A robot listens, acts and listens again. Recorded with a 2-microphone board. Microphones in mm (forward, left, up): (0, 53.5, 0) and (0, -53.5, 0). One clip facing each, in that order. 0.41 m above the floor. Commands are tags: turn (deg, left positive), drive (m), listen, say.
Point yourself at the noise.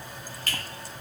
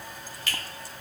<turn deg="45"/>
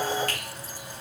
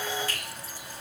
<listen/>
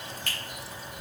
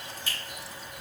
<turn deg="85"/>
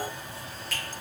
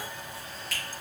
<say>Facing the finger snap, 1 to 2 m away.</say>